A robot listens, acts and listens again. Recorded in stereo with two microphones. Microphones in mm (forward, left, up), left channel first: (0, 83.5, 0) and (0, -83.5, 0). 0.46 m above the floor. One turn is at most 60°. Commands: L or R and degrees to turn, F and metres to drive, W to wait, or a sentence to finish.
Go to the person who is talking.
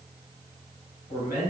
L50
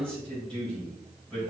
L10
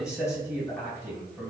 F1.0
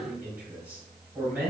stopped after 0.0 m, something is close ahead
R10
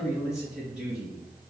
Blocked. The man speaking is further on, straight ahead.